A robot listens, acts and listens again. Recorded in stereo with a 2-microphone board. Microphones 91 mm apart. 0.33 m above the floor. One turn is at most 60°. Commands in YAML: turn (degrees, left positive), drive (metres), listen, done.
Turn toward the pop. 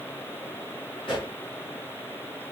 turn: 60
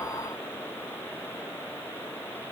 listen: true
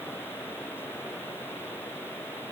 done: "I heard a pop, but can't make it out now. It was about 5° left or 55° left."